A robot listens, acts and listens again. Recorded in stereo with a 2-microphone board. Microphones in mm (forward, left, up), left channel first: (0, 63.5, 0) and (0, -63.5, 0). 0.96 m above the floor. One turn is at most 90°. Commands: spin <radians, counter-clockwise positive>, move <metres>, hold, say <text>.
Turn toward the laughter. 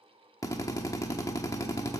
hold
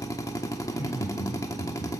spin 1.57
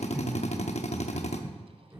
spin -0.35
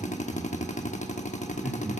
say Found it: laughter, straight ahead.